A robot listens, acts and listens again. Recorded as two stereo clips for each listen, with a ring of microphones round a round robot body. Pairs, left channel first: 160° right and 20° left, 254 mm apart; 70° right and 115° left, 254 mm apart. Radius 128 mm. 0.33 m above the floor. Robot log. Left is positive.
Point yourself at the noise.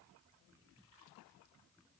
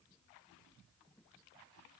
cmd idle
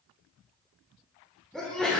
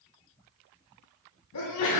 note: The sneeze: 65° right.
cmd yaw -65
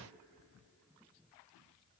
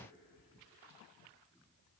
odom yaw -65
end: I heard a sneeze from this way, but can't make it out now.